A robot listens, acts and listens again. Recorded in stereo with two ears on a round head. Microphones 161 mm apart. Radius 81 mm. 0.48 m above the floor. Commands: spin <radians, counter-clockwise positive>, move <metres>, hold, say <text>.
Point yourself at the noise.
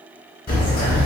spin 0.87
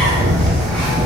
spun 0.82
say Facing the bird, under 1 m away.